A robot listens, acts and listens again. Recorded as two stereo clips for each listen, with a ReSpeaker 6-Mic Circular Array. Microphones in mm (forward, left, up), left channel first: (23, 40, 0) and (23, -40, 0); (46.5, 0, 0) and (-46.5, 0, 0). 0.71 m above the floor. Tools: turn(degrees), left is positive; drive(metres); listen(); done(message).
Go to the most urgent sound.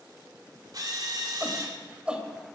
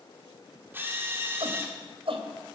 turn(degrees=-165)
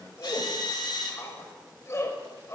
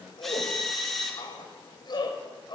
turn(degrees=35)
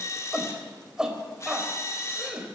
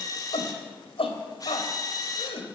turn(degrees=-10)
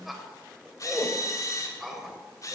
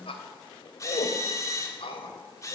drive(metres=1.0)
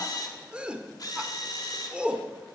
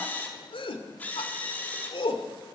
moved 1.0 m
turn(degrees=-15)
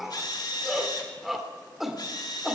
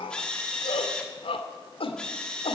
drive(metres=1.0)
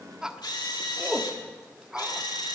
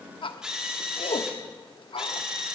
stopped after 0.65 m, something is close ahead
turn(degrees=-10)
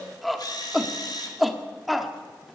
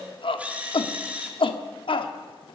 done("I am next to the shout.")